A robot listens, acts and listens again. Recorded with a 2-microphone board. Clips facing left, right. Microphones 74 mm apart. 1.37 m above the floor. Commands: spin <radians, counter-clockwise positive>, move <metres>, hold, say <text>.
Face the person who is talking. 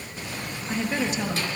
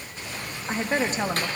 spin -0.70
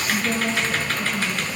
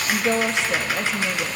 spin -1.83
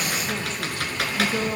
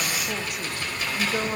spin -0.26
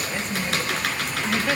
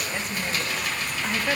say Facing the woman speaking.